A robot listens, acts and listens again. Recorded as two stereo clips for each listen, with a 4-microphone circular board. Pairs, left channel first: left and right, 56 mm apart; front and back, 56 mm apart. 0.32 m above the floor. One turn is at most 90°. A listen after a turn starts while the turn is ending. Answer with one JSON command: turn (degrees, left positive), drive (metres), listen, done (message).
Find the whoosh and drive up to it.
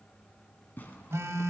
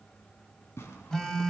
{"listen": true}
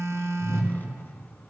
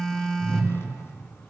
{"turn": 90}
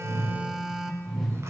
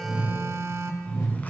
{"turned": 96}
{"drive": 1.0}
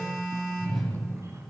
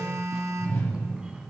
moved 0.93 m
{"drive": 1.0}
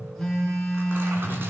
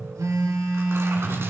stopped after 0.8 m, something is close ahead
{"done": "Arrived at the whoosh, straight ahead."}